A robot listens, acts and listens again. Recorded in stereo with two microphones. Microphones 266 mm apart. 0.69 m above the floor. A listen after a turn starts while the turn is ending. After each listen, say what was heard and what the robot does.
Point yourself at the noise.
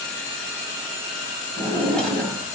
Turn 30° left.
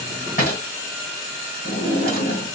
So it is at 150° left. Turn 150° left.
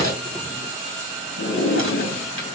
The drawer is now 50° left. Turn 50° left.
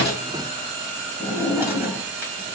Found it: a drawer, straight ahead.